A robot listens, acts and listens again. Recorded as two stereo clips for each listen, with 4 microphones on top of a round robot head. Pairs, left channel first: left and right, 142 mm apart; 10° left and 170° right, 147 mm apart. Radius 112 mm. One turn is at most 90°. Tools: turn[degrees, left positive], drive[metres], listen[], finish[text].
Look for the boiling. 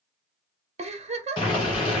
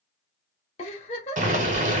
Thought: The boiling: 155° left.
Action: turn[90]
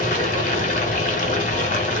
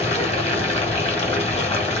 Thought: The boiling is now 60° left.
Action: turn[60]
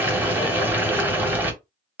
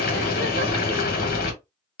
Thought: The boiling is now 10° right.
Action: turn[-10]
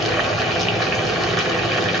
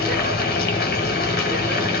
Action: finish[Found it: boiling, straight ahead.]